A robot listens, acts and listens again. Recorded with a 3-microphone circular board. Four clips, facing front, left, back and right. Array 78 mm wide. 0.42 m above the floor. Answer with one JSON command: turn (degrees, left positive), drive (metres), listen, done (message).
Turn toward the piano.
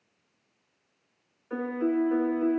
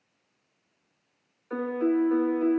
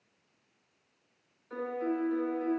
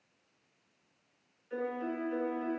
{"turn": 70}
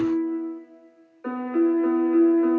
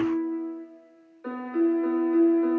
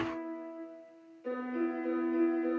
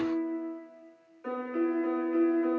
{"turn": 10}
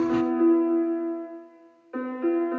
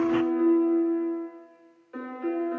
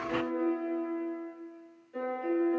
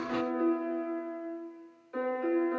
{"done": "Facing the piano."}